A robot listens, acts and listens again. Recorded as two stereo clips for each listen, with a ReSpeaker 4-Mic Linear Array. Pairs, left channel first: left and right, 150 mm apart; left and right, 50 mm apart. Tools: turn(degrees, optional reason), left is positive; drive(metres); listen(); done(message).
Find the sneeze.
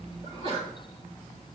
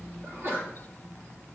turn(degrees=-40, reason="The sneeze: about 40° right or 140° right.")
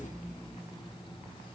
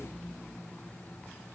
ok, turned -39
listen()
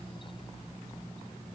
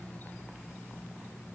done("I heard a sneeze, but can't make it out now. It was about straight ahead or 100° right.")